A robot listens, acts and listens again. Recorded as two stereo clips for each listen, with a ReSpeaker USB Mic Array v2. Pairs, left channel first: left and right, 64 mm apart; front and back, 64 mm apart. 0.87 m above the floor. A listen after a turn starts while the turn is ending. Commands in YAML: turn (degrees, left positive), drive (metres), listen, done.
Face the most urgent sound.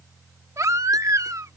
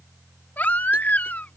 turn: -65
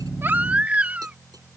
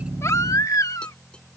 turn: -25
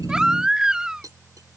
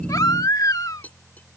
turn: -15
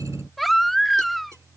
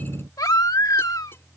done: "Facing the baby crying."